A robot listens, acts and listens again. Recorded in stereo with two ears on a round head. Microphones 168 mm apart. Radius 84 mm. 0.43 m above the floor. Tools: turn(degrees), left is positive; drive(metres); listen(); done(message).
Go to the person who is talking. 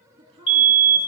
turn(degrees=-30)
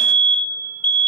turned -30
listen()
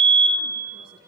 listen()
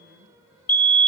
done("I heard a woman speaking, but can't make it out now. It was about straight ahead or 120° right. I did not reach it.")